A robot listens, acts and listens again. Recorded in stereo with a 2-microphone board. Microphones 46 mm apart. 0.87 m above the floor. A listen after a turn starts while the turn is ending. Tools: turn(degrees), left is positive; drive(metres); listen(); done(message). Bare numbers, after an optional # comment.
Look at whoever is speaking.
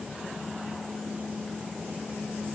listen()
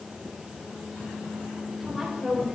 turn(-30)
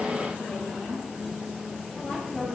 # So it is at 25° left.
turn(25)
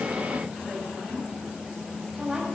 # The woman speaking is now 10° right.
turn(-10)
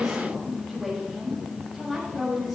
done("Facing the woman speaking, over 4 m away.")